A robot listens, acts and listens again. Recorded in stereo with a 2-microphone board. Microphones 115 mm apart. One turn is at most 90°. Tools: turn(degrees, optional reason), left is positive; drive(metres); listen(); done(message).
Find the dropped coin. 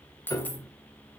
turn(degrees=30)
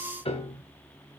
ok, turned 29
listen()
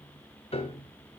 done("I heard a dropped coin, but can't make it out now. It was about 15° right or 135° left.")